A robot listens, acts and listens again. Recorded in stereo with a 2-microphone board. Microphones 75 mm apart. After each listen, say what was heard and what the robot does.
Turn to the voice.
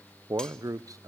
The man speaking: about 50° right or 130° right. Turn 50° right.
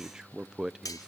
So it is at 10° right. Turn 10° right.
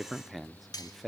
Found it: a man speaking, straight ahead, under 1 m away.